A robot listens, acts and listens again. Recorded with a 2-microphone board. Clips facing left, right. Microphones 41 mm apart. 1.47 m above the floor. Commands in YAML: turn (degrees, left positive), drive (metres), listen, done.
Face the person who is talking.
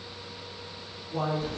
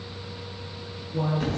turn: 65
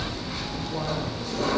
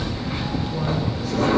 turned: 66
listen: true
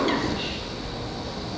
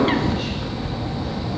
listen: true
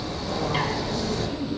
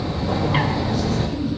done: "Found it: a man speaking, straight ahead, over 4 m away."